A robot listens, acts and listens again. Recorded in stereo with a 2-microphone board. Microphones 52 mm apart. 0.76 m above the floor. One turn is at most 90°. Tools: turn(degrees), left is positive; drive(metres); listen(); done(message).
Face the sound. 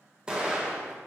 turn(degrees=-15)
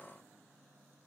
listen()
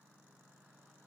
done("I heard an explosion, but can't make it out now. It was about straight ahead or 150° right.")